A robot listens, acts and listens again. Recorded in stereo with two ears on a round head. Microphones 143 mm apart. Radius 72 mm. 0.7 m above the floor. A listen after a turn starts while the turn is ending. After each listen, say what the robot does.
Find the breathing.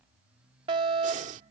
Turn 50° right.
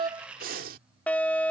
Turn 70° right.
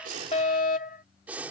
Turn 10° right.
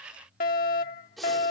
Facing the breathing.